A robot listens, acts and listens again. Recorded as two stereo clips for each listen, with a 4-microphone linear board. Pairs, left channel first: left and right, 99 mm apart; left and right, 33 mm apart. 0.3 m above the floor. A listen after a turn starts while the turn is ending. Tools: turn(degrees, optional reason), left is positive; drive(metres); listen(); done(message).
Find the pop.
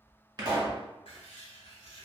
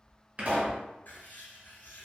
turn(degrees=-40, reason="The pop: about 40° right or 140° right.")
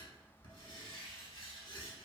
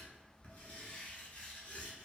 listen()
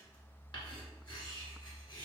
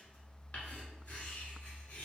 done("I heard a pop, but can't make it out now. It was about straight ahead or 100° right.")